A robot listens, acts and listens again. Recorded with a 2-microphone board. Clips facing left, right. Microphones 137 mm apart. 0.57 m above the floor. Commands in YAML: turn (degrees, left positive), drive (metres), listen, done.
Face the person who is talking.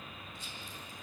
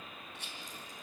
listen: true
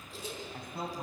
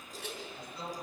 turn: 60
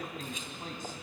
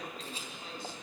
listen: true
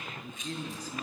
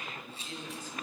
turn: 35
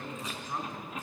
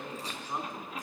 turn: -15
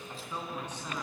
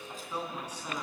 turn: -10
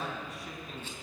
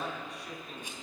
done: "Facing the man speaking, over 4 m away."